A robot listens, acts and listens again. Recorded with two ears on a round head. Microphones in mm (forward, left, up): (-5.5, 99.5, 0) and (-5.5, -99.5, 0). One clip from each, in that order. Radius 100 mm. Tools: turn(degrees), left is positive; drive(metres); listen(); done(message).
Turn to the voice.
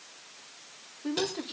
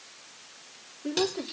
turn(degrees=30)
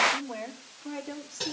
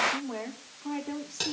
turn(degrees=-20)
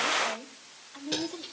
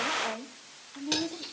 done("Found it: a woman speaking, straight ahead.")